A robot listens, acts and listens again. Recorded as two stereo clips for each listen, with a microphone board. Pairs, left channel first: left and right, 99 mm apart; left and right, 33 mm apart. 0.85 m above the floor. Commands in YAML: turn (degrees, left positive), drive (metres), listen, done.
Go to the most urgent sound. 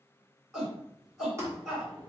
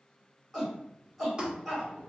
turn: 30
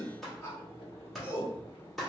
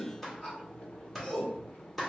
turn: 145
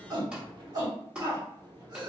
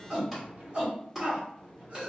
turn: -40
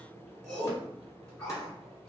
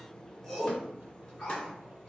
drive: 1.0
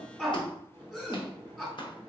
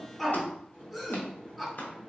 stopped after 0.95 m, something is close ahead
done: "I am next to the shout."